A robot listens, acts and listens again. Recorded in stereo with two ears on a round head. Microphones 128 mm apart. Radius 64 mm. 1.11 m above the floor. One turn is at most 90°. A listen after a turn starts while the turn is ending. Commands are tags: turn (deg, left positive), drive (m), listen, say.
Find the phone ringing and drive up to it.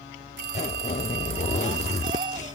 <turn deg="-90"/>
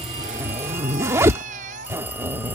<listen/>
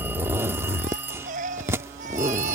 <turn deg="-15"/>
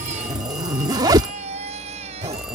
<listen/>
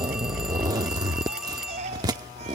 <drive m="1.0"/>
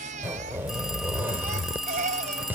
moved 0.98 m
<drive m="1.0"/>
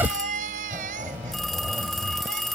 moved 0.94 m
<drive m="1.0"/>
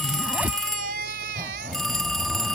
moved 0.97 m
<drive m="1.0"/>
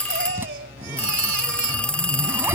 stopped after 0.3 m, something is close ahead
<turn deg="10"/>
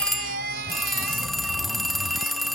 <say>I am next to the phone ringing.</say>